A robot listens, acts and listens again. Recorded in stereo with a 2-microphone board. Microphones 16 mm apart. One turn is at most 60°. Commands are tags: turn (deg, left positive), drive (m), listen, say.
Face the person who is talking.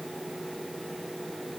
<listen/>
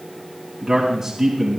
<turn deg="-15"/>
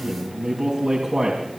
<turn deg="-60"/>
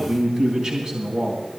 <turn deg="-60"/>
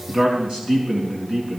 <turn deg="-60"/>
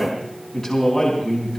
<turn deg="15"/>
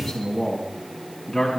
<say>Found it: a man speaking, straight ahead, 2 to 4 m away.</say>